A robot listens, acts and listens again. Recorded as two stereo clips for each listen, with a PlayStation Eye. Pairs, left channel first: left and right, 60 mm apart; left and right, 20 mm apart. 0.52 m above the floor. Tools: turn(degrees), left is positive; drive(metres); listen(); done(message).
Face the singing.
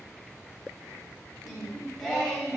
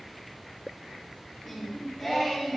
turn(degrees=30)
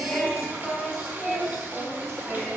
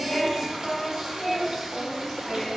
turn(degrees=30)
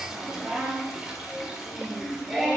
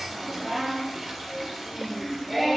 turn(degrees=-10)
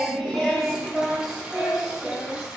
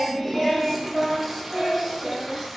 done("Facing the singing, 2 to 4 m away.")